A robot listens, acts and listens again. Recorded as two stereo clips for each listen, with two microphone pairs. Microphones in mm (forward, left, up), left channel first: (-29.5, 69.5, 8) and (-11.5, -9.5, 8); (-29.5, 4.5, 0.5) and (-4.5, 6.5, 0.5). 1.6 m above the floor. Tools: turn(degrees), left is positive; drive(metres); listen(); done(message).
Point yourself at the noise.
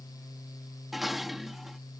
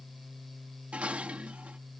turn(degrees=15)
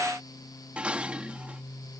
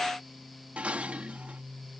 done("Found it: dishes clattering, straight ahead.")